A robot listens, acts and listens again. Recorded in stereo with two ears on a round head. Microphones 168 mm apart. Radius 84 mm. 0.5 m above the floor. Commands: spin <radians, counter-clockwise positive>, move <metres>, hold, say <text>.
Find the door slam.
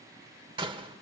spin -0.52
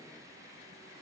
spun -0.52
hold
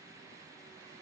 say I heard a door slam, but can't make it out now. It was about straight ahead or 120° right.